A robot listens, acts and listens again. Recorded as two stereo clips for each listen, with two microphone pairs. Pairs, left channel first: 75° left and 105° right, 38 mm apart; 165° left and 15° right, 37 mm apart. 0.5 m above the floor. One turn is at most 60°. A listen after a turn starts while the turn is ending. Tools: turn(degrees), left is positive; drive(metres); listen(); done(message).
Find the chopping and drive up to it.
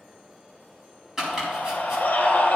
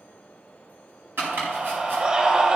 turn(degrees=-25)
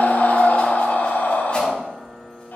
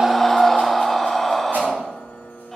listen()
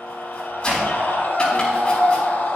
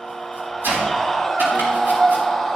turn(degrees=10)
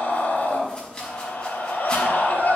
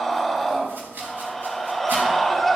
turn(degrees=10)
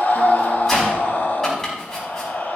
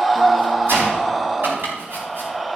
drive(metres=1.0)
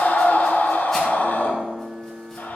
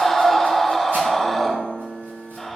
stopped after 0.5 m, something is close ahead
listen()
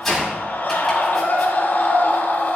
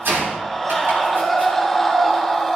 done("Blocked. The chopping is further on, straight ahead.")